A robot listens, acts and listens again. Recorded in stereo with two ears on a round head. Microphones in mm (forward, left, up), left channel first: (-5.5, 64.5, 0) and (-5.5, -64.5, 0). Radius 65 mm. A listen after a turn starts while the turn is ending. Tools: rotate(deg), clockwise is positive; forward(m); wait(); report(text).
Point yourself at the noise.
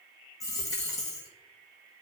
rotate(-25)
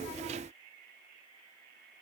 wait()
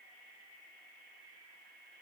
report("I heard a dropped coin, but can't make it out now. It was about straight ahead or 130° left.")